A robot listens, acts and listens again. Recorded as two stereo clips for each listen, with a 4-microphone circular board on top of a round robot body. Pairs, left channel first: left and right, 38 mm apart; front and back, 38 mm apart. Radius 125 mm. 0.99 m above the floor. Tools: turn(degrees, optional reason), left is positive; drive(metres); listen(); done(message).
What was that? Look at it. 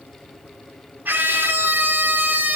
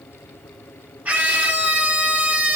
turn(degrees=-130, reason="The scream: 130° right.")
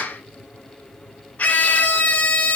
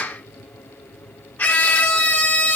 turn(degrees=40, reason="The scream is now 40° left.")
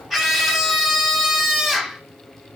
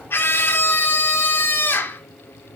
done("Found it: a scream, straight ahead.")